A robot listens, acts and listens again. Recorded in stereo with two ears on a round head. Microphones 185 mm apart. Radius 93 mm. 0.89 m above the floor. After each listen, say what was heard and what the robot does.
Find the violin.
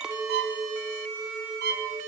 The violin: about 55° right or 125° right. Turn 55° right.
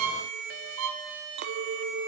So it is at 75° right. Turn 75° right.
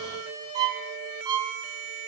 The violin is now 20° right. Turn 20° right.
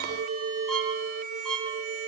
Found it: a violin, straight ahead, over 4 m away.